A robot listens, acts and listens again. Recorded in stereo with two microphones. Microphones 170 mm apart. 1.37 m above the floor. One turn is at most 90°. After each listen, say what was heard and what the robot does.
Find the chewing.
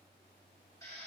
Keep listening.
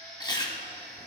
The chewing: about 25° left or 155° left. Turn 25° left.
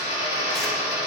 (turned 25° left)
Keep listening.
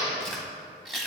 Found it: chewing, straight ahead.